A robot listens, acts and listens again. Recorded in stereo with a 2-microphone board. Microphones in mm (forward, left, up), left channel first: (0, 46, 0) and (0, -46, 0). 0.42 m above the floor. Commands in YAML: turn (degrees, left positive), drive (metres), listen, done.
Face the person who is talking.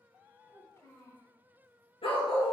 turn: 35
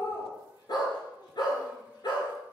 listen: true
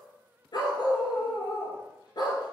listen: true
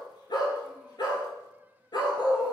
done: "I heard a child speaking, but can't make it out now. It was about straight ahead or 110° left."